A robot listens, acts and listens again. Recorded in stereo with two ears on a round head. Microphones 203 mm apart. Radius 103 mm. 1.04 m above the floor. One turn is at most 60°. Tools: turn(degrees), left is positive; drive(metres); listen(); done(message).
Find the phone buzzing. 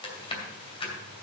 listen()
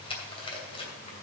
listen()
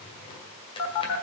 turn(degrees=60)
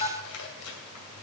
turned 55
turn(degrees=25)
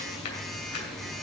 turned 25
done("Facing the phone buzzing.")